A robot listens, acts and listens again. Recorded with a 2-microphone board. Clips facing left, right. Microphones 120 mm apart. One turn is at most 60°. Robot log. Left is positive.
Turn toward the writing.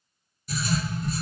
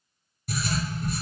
note: The writing: about 70° right or 110° right.
cmd yaw -60
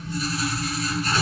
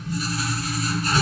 note: So it is at 45° right.
cmd yaw -45
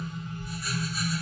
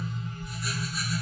end: Facing the writing, 1 to 2 m away.